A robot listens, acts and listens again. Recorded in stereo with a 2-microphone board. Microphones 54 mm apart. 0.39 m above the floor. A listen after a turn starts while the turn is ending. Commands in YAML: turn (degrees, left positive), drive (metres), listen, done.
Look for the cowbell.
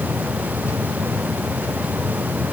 listen: true
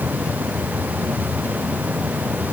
listen: true
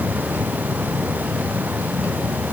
done: "I can't make out a cowbell."